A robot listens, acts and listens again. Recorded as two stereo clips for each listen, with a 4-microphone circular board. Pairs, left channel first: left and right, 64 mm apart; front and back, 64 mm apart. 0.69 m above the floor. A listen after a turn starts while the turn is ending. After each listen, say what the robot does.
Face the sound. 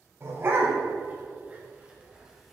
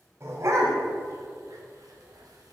Turn 140° right.
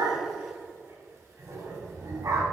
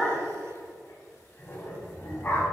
Turn 65° right.
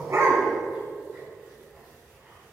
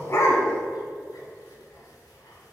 Keep listening.
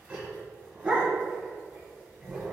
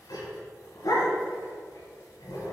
Turn 15° right.
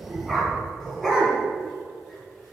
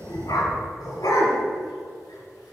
Facing the dog barking.